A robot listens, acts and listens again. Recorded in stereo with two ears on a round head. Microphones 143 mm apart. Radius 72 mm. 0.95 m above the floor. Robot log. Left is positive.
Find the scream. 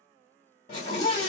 note: The scream: about 40° left or 140° left.
cmd yaw +40
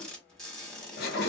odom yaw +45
note: So it is at 85° left.
cmd yaw +85
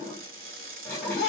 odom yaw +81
end: Found it: a scream, straight ahead.